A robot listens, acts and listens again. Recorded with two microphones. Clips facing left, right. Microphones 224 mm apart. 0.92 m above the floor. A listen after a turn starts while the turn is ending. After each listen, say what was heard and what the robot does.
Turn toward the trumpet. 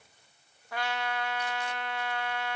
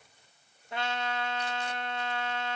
The trumpet: about 25° right or 155° right. Turn 25° right.
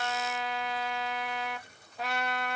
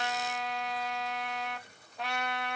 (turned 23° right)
Found it: a trumpet, straight ahead.